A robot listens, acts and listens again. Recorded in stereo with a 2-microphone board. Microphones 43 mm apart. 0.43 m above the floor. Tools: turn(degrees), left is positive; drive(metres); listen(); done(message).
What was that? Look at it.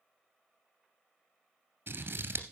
turn(degrees=-55)
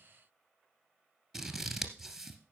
done("Facing the scissors, 1 to 2 m away.")